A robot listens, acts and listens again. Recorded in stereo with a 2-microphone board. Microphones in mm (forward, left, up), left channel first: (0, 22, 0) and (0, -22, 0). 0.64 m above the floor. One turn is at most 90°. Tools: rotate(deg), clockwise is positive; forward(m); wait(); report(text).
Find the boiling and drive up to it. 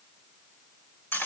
wait()
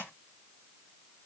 wait()
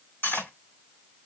report("I can't make out boiling, only cutlery clinking.")